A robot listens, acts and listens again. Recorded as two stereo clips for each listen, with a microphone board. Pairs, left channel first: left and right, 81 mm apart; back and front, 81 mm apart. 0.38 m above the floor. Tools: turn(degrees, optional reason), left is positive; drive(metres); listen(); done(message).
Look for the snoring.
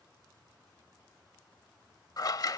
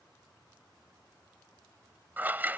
listen()
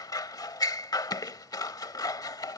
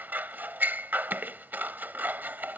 listen()
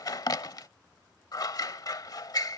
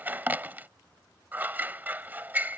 done("I can't make out snoring to turn to.")